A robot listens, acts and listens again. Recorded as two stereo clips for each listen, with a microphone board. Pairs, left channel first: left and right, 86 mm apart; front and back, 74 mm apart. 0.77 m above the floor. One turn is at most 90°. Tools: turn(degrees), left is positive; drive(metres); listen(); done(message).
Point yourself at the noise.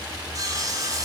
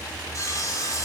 turn(degrees=-50)
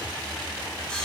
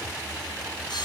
listen()
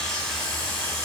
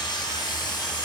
done("Found it: sawing, straight ahead.")